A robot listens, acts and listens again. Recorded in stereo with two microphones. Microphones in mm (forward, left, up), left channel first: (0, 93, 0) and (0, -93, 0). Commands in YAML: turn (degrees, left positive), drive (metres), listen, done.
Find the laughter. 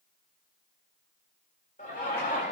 turn: 40
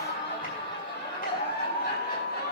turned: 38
turn: 125
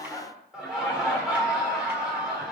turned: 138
done: "Found it: laughter, straight ahead, 2 to 4 m away."